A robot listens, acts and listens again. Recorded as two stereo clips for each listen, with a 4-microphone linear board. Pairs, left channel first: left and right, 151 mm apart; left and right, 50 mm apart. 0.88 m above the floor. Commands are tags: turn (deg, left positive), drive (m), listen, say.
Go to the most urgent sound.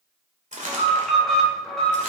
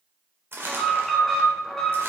<turn deg="30"/>
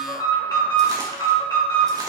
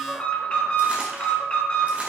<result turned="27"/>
<turn deg="150"/>
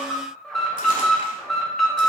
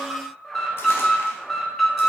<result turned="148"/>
<drive m="1.0"/>
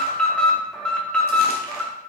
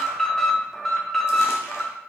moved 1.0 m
<turn deg="10"/>
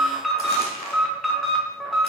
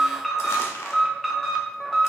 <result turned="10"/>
<drive m="1.0"/>
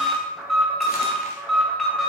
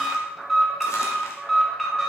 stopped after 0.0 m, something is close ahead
<say>I am next to the alarm.</say>